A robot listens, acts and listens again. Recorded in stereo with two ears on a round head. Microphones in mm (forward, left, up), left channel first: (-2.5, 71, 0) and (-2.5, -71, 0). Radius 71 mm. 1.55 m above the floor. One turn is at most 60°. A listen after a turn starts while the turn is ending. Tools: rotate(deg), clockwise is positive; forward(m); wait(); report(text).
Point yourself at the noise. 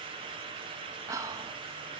rotate(20)
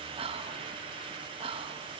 rotate(60)
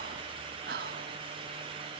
rotate(60)
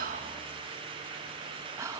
rotate(20)
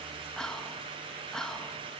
report("Found it: whispering, straight ahead, 1 to 2 m away.")